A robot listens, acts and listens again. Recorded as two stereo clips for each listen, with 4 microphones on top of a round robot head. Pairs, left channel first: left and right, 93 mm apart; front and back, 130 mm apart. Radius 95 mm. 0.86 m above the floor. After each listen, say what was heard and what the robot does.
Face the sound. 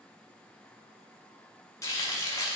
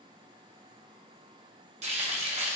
The frying: 145° left. Turn 145° left.
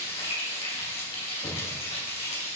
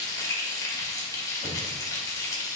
The frying is now 65° left. Turn 65° left.
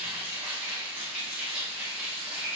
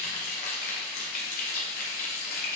The frying is now 10° right. Turn 10° right.
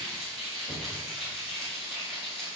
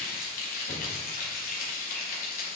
Facing the frying, 1 to 2 m away.